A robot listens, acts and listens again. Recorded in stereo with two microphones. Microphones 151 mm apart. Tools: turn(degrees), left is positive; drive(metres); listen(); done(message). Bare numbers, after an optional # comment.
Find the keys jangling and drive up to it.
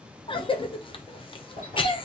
# The keys jangling: about 70° left or 110° left.
turn(70)
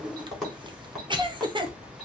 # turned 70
drive(1.0)
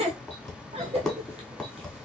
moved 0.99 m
drive(1.0)
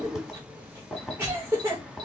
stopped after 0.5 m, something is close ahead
done("Arrived at the keys jangling, straight ahead.")